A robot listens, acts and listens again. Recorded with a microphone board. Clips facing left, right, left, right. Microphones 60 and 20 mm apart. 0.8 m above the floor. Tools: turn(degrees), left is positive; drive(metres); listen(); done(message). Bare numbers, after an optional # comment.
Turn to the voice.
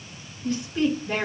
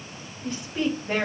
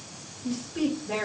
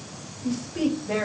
# The woman speaking: about 25° right or 155° right.
turn(-25)
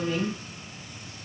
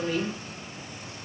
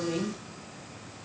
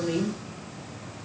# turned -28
# So it is at 125° right.
turn(-125)
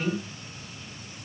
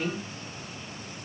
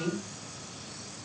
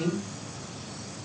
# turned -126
done("Found it: a woman speaking, straight ahead.")